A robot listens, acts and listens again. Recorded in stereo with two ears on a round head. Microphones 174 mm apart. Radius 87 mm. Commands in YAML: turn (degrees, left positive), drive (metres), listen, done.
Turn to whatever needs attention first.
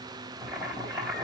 listen: true
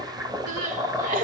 turn: -40
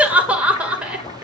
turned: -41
turn: -10
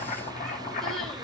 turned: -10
listen: true
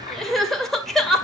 done: "Found it: crying, straight ahead, 2 to 4 m away."